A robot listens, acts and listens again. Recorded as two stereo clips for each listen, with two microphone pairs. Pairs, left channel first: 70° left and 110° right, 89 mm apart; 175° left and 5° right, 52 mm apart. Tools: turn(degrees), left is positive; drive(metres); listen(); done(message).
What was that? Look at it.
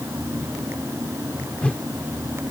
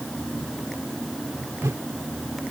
done("Found it: a whoosh, straight ahead.")